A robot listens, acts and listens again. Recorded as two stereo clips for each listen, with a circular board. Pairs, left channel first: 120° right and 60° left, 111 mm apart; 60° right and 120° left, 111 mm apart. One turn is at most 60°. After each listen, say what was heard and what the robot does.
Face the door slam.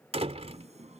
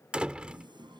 The door slam: 40° left. Turn 40° left.
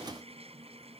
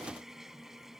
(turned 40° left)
I heard a door slam from this way, but can't make it out now.